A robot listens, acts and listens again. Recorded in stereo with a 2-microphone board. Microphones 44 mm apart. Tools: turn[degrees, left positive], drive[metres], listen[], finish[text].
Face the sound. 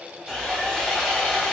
Action: turn[30]
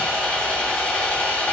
Thought: So it is at 145° left.
Action: turn[145]
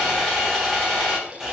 Action: finish[Facing the sawing.]